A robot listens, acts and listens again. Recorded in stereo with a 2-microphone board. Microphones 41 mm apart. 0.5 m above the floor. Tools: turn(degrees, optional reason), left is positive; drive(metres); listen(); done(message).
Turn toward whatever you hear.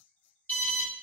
turn(degrees=45, reason="The alarm: about 45° left or 135° left.")
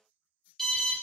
turn(degrees=10, reason="So it is at 10° left.")
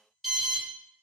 done("Found it: an alarm, straight ahead, under 1 m away.")